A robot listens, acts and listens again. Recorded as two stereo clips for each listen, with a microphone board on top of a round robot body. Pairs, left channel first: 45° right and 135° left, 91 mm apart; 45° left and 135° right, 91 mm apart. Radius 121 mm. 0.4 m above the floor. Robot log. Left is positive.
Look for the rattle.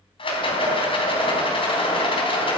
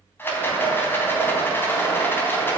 note: The rattle: 20° right.
cmd yaw -20
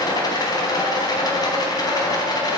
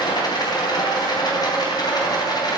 end: Facing the rattle.